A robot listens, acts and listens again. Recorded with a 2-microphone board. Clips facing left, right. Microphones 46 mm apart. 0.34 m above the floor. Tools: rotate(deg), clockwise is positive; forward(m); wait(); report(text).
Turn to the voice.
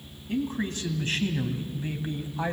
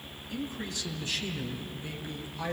rotate(-30)
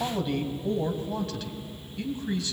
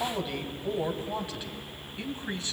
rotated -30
rotate(30)
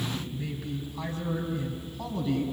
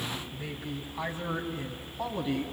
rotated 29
rotate(20)
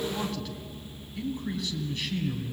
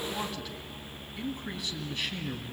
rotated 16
report("Facing the man speaking, 2 to 4 m away.")